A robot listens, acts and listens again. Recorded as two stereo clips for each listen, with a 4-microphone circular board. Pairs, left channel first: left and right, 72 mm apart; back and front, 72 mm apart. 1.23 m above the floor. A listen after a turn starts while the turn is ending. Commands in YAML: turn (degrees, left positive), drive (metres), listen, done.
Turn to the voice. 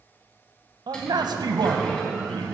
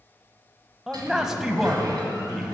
turn: -85
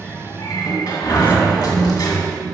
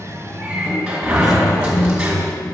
listen: true
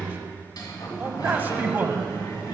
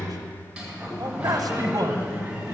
turn: -30
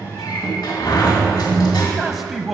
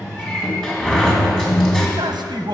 done: "Found it: a man speaking, straight ahead, under 1 m away."